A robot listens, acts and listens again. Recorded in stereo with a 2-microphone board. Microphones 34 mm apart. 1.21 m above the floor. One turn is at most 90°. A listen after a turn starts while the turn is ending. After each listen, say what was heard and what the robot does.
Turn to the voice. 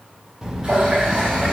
Turn 30° right.
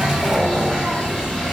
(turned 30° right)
So it is at 135° right. Turn 90° right.
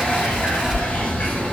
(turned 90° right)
The child speaking is now 50° right. Turn 50° right.
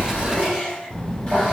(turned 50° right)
The child speaking is now 15° left. Turn 15° left.
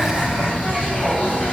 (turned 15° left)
Facing the child speaking.